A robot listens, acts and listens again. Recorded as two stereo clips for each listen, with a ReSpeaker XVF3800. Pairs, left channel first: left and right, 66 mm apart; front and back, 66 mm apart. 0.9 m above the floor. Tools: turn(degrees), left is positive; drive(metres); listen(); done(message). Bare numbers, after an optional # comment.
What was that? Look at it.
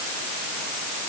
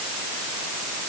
listen()
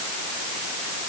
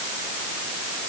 listen()
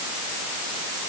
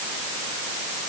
done("I can't make out anything.")